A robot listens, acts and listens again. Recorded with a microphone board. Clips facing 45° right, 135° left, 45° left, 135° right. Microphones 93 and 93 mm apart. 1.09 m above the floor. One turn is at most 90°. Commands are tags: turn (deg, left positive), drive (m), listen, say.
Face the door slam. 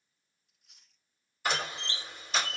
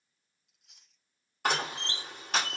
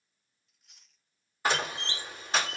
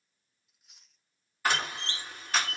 <turn deg="90"/>
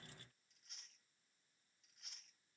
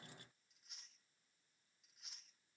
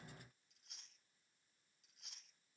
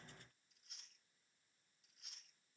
<turn deg="25"/>
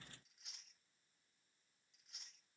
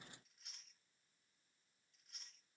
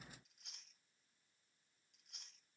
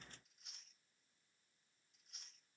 <say>I heard a door slam from this way, but can't make it out now.</say>